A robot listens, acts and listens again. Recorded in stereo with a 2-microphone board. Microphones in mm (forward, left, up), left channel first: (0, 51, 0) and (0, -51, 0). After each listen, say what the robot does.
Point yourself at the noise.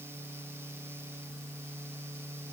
Keep listening.
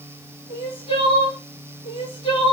Turn 90° left.
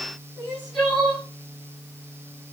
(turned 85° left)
Found it: crying, straight ahead, over 4 m away.